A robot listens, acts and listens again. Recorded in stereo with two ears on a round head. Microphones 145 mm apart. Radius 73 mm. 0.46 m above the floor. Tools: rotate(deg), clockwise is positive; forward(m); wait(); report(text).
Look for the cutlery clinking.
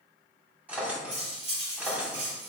rotate(40)
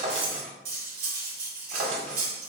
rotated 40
rotate(95)
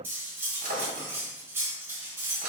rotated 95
rotate(15)
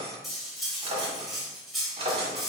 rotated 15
report("Found it: cutlery clinking, straight ahead.")